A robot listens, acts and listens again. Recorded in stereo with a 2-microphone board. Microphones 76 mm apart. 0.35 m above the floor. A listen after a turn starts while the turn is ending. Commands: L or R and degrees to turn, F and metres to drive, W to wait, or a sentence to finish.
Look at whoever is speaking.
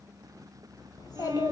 L60
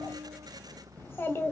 L35
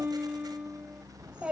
R15
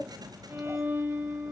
Facing the child speaking.